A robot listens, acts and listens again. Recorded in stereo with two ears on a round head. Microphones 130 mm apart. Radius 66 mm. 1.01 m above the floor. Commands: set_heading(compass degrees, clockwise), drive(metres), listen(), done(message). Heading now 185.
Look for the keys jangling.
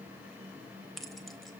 set_heading(155)
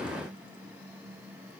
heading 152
listen()
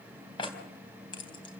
set_heading(7)
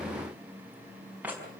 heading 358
set_heading(8)
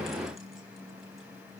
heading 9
listen()
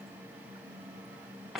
done("Facing the keys jangling.")